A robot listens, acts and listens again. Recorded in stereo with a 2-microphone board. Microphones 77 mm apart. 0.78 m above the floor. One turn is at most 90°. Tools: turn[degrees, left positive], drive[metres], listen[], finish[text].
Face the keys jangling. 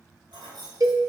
Action: turn[-90]
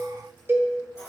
Thought: So it is at 40° left.
Action: turn[40]
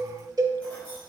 Action: listen[]
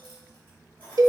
Thought: The keys jangling is now 25° left.
Action: turn[25]
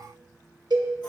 Action: listen[]
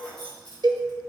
Thought: The keys jangling is now 15° left.
Action: turn[15]
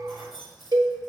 Action: finish[Found it: keys jangling, straight ahead.]